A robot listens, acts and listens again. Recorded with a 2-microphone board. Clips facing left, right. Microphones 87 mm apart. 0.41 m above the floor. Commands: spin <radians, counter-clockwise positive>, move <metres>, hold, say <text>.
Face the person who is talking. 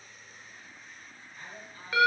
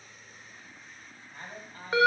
spin -0.87
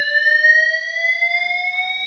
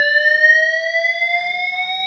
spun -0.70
hold
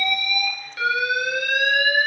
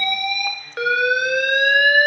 hold
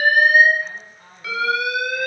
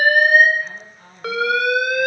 say Facing the man speaking, 2 to 4 m away.